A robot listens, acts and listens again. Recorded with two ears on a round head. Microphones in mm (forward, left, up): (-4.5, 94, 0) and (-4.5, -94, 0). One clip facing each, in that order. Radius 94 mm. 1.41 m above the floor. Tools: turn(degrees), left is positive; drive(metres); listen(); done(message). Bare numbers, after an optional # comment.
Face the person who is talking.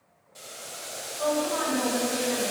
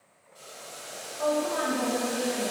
# The woman speaking: about 25° right or 155° right.
turn(-25)
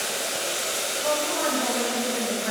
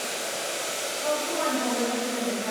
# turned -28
listen()
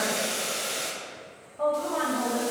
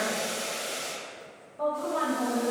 done("Facing the woman speaking, 1 to 2 m away.")